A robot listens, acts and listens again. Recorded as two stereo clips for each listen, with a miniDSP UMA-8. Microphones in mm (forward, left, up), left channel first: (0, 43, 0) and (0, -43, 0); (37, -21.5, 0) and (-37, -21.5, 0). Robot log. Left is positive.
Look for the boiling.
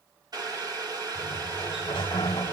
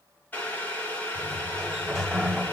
note: The boiling: 65° right.
cmd yaw -65
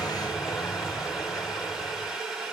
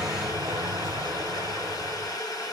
note: The boiling is now 10° right.
cmd yaw -10
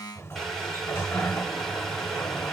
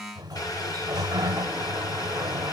cmd idle
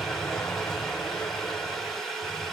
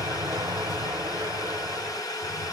end: Facing the boiling.